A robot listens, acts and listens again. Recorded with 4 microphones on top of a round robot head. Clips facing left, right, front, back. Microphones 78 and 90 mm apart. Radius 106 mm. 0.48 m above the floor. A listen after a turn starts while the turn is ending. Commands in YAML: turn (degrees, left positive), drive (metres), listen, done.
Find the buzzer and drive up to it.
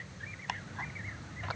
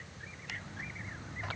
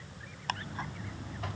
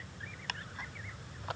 drive: 1.0
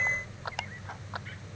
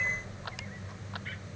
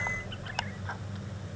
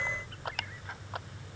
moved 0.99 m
turn: -20
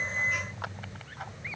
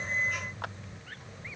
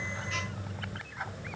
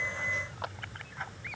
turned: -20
drive: 1.0
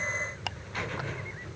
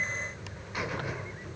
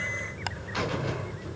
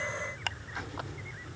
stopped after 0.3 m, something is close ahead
turn: -10
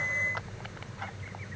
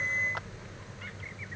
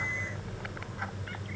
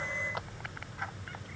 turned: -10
done: "I am next to the buzzer."